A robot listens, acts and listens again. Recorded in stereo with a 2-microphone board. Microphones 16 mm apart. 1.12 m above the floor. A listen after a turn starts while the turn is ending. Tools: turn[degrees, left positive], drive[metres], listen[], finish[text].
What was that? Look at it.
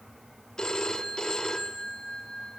Thought: The phone ringing: about 55° left or 125° left.
Action: turn[55]
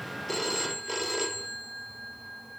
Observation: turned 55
Action: finish[Facing the phone ringing, 2 to 4 m away.]